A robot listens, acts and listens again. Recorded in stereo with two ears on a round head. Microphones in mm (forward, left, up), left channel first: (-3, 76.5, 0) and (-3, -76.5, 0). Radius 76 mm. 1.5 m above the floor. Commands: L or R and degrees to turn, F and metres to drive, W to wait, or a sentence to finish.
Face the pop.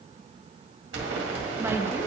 R90
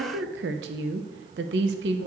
I heard a pop from this way, but can't make it out now.